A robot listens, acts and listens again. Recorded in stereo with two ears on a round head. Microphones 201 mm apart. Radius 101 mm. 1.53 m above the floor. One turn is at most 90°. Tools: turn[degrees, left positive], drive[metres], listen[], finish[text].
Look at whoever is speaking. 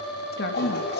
Thought: The woman speaking: about 45° left or 135° left.
Action: turn[45]
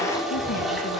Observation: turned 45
Action: listen[]
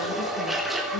Action: listen[]
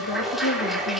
Thought: So it is at 90° left.
Action: turn[90]
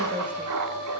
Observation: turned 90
Action: listen[]
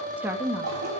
Action: finish[Facing the woman speaking.]